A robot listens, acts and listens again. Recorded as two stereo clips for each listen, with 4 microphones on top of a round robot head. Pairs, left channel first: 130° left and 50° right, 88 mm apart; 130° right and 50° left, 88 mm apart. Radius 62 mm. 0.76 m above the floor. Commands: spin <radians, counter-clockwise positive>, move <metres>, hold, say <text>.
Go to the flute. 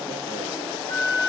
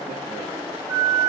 spin 1.92
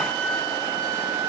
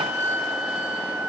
spin -0.17
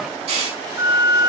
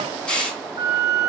move 1.0
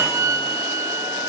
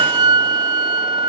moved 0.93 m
move 1.0
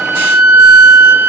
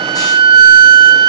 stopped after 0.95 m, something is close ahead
spin 0.17
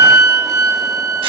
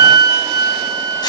say I am next to the flute.